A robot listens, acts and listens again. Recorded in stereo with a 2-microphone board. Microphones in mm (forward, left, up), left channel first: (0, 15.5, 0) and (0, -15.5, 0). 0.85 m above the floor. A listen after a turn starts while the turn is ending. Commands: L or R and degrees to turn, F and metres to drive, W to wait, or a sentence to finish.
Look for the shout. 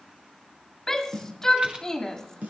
L20
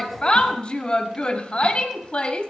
L140
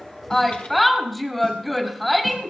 Found it: a shout, straight ahead.